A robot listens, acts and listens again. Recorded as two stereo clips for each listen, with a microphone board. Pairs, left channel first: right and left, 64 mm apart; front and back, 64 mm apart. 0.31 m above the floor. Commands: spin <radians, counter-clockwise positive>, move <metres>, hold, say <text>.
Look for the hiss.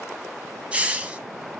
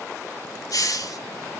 spin 0.35
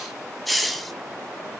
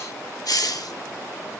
say Found it: a hiss, straight ahead, under 1 m away.